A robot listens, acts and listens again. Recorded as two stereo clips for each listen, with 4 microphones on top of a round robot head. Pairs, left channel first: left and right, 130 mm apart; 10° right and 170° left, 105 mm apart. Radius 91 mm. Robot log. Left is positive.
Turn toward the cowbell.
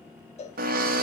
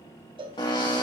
note: The cowbell: 125° left.
cmd yaw +125
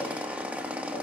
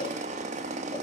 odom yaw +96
note: Nothing new. It was at 30° left.
cmd yaw +30
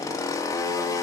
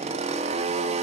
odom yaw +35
cmd idle
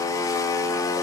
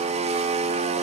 end: Facing where the cowbell came from. I can't hear it now.